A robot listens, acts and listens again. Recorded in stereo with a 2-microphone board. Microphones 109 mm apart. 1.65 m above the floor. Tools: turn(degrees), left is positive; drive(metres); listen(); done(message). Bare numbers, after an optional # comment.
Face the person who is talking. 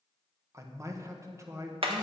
# The man speaking: about 25° right or 155° right.
turn(-25)
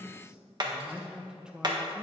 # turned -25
done("Found it: a man speaking, straight ahead.")